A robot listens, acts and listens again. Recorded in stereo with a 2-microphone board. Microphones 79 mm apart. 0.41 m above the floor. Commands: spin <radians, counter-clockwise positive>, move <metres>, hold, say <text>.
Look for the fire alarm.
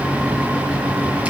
hold
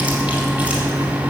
hold
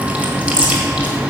say I can't make out a fire alarm, only chewing.